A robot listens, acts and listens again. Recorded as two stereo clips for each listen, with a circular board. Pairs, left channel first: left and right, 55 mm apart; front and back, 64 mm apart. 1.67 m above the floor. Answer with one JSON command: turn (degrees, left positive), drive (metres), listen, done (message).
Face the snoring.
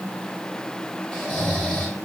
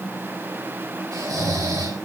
{"turn": 170}
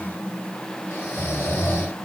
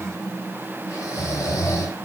{"turn": 40}
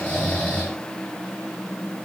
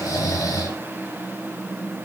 {"turn": 20}
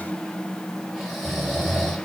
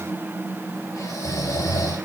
{"done": "Facing the snoring."}